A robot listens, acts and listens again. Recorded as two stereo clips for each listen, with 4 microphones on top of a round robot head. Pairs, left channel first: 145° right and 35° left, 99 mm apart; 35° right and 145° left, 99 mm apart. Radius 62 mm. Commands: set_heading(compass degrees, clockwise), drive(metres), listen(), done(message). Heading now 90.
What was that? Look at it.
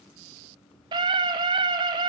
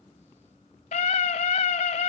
set_heading(100)
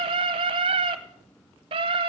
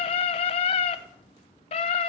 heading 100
done("Facing the scream, 1 to 2 m away.")